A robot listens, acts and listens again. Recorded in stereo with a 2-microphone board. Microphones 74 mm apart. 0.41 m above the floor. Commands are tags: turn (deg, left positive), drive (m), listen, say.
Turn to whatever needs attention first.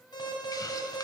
<turn deg="75"/>
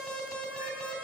<turn deg="10"/>
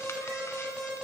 <say>Found it: an alarm, straight ahead.</say>